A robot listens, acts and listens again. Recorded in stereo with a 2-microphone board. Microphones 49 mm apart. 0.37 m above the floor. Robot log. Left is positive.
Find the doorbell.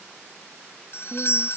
note: The doorbell: about 55° left or 125° left.
cmd yaw +55
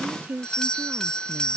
note: So it is at 20° left.
cmd yaw +20
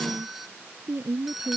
end: Found it: a doorbell, straight ahead.